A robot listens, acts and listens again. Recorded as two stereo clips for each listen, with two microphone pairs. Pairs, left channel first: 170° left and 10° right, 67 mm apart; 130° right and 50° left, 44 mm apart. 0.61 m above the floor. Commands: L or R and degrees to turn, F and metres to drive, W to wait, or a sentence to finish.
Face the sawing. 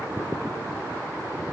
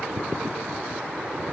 W
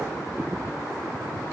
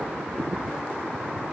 W
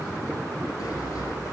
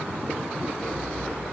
L150
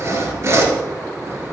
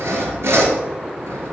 L35
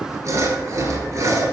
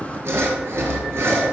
L30
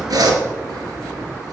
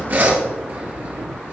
Facing the sawing.